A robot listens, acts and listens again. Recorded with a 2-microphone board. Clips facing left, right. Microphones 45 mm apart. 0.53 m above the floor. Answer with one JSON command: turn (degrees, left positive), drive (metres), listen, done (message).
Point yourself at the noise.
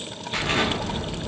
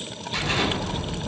{"turn": 40}
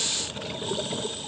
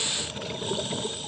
{"listen": true}
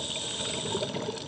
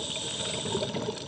{"done": "I heard an explosion, but can't make it out now. It was about straight ahead or 100° left."}